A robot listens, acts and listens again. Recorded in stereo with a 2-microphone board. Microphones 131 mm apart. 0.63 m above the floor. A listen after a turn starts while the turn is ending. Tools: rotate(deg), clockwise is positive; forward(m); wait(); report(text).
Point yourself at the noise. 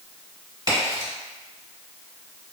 rotate(40)
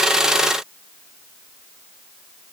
wait()
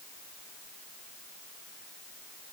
report("I heard a crack, but can't make it out now. It was about straight ahead or 100° right.")